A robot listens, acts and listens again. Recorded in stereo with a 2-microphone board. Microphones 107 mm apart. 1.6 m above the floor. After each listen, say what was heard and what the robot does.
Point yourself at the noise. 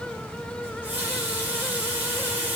The running tap: about 15° right or 165° right. Turn 15° right.
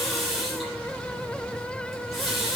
Found it: a running tap, straight ahead.